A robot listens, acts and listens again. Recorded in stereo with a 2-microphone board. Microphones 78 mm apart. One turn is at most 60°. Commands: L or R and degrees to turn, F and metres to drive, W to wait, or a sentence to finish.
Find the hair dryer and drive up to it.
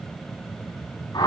W
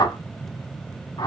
W
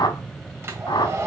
R35
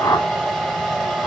F1.0
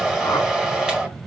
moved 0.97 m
F1.0
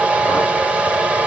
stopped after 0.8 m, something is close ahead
R15
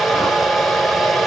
Arrived at the hair dryer, straight ahead.